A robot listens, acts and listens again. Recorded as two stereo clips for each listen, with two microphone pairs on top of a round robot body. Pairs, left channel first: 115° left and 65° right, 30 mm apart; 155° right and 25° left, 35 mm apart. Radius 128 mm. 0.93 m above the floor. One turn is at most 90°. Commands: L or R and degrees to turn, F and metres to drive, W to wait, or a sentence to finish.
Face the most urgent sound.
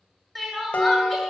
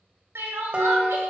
L15
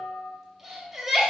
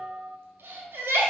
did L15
Found it: crying, straight ahead, 1 to 2 m away.